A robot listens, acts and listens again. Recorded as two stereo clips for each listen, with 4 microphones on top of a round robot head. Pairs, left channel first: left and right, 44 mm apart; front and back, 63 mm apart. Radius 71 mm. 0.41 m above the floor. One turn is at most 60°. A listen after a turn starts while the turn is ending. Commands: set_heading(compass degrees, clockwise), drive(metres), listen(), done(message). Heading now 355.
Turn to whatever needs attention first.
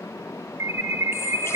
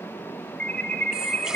set_heading(55)
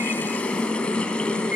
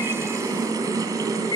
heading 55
set_heading(70)
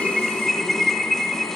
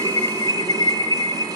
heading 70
done("Found it: an alarm, straight ahead.")